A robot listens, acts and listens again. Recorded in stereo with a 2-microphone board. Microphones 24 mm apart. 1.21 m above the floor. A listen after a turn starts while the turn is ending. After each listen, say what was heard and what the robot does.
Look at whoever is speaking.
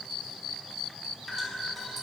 Keep listening.
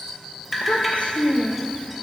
The child speaking: about 70° left or 110° left. Turn 70° left.
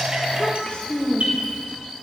So it is at 40° left. Turn 40° left.
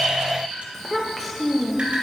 The child speaking is now 10° left. Turn 10° left.
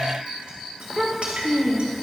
Found it: a child speaking, straight ahead.